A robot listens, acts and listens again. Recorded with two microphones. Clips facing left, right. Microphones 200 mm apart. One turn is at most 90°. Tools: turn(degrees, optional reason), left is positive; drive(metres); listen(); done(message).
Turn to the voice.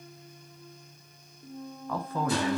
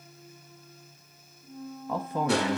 turn(degrees=-15, reason="The man speaking: about 15° right or 165° right.")
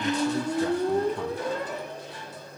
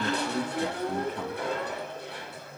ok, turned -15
done("Found it: a man speaking, straight ahead, under 1 m away.")